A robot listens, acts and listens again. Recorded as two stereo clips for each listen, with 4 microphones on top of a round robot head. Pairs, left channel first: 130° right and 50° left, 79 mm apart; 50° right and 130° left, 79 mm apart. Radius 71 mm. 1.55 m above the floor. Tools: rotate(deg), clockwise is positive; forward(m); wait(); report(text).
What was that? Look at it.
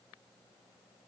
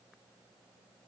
wait()
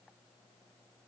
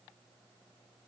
wait()
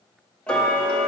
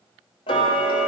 rotate(50)
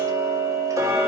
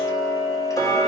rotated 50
report("Found it: ticking, straight ahead.")